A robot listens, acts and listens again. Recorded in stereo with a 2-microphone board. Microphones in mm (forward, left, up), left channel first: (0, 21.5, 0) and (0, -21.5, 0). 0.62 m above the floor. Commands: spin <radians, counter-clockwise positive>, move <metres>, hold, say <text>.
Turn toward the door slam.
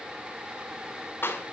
hold
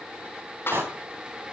spin -1.05
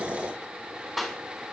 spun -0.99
hold
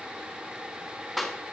say I heard a door slam, but can't make it out now. It was about straight ahead or 65° right.